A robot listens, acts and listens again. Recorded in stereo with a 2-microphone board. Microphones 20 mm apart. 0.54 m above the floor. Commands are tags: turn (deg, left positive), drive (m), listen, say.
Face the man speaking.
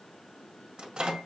<listen/>
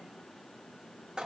<listen/>
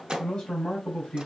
<turn deg="55"/>
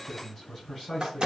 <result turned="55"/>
<turn deg="10"/>
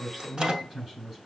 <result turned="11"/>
<say>Facing the man speaking.</say>